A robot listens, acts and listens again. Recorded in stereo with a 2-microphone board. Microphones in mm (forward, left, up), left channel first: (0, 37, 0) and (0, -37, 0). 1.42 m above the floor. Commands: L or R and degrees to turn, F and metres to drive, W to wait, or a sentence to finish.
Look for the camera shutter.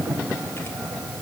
W
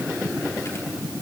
W
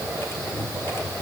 I can't make out a camera shutter to turn to.